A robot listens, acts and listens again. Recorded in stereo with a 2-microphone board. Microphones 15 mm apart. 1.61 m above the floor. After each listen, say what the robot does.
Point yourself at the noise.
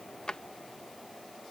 Turn 55° left.
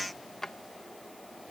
Turn 45° left.
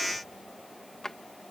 Turn 45° left.
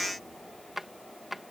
Turn 10° right.
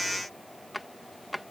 Facing the drawer.